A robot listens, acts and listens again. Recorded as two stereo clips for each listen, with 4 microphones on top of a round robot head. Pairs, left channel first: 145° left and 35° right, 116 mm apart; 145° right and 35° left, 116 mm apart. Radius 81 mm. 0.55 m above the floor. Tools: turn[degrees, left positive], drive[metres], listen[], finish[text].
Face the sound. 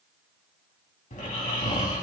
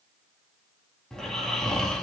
Thought: The snoring: 130° left.
Action: turn[130]
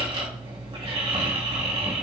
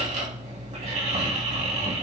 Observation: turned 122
Thought: The snoring is now 10° left.
Action: turn[10]
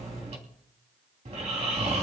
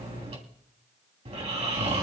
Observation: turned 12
Action: finish[Found it: snoring, straight ahead.]